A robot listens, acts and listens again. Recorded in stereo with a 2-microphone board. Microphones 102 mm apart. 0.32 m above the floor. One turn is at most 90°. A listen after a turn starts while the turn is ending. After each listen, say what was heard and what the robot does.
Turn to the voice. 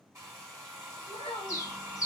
The child speaking: about 70° left or 110° left. Turn 70° left.
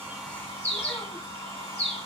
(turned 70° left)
Keep listening.
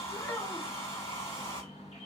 So it is at 25° left. Turn 25° left.
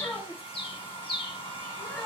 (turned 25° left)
Found it: a child speaking, straight ahead, 1 to 2 m away.